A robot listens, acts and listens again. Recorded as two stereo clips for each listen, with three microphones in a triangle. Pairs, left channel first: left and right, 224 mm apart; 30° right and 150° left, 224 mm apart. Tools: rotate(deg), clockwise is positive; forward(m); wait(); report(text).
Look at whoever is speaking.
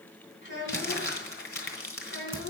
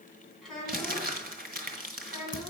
rotate(-60)
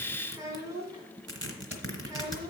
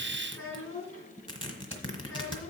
rotate(15)
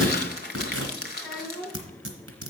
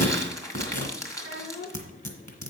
report("Facing the child speaking.")